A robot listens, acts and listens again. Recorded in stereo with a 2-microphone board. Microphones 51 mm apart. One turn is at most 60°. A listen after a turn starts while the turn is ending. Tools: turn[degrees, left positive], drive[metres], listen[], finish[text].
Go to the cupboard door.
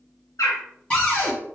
Thought: The cupboard door: about 25° left or 155° left.
Action: turn[25]
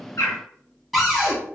Action: drive[1.0]
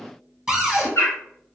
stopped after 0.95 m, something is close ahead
Action: finish[I am next to the cupboard door.]